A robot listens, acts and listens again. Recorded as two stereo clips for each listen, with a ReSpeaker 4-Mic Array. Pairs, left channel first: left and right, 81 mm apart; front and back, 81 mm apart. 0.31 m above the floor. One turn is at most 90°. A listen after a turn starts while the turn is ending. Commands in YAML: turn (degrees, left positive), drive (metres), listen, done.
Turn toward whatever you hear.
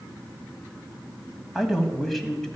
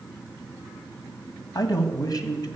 turn: 10
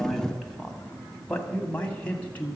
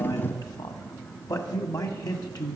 turn: 25
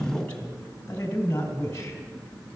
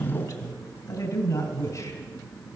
turn: 30
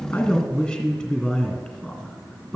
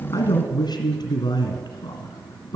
done: "Found it: a man speaking, straight ahead."